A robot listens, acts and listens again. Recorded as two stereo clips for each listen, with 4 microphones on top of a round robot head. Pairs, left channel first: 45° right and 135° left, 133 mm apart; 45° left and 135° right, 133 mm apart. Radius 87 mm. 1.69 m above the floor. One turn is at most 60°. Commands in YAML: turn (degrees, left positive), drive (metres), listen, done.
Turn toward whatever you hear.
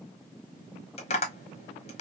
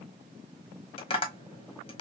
done: "Found it: tapping, straight ahead, 1 to 2 m away."